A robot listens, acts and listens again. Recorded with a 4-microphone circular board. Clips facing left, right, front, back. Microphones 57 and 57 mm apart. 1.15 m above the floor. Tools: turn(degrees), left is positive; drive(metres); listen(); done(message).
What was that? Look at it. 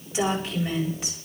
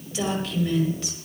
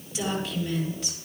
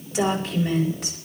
turn(degrees=155)
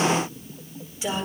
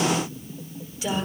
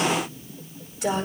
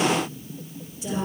turn(degrees=20)
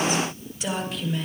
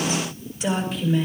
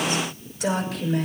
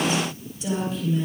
done("Facing the woman speaking, over 4 m away.")